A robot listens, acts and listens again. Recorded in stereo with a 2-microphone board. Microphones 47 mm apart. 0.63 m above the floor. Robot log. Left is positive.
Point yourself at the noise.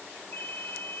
note: The ringtone: about 50° left or 130° left.
cmd yaw +50
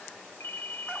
note: So it is at 65° left.
cmd yaw +65
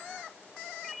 end: Found it: a ringtone, straight ahead.